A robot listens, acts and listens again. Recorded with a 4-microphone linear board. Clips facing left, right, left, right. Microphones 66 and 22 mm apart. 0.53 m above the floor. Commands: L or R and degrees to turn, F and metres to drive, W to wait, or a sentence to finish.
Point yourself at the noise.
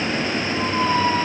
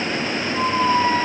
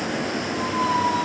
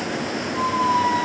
R30
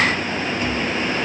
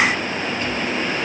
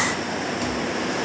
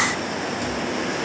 W
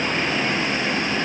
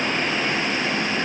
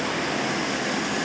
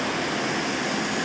W
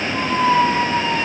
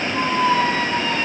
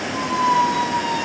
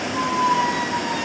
L20
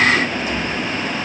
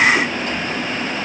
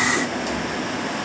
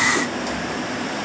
W
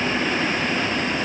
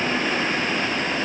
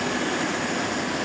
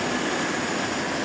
W
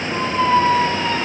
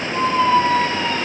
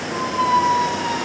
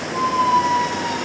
L10
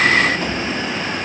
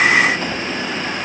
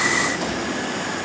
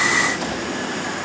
W
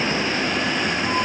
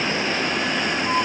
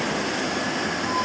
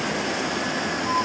Found it: a squeak, straight ahead.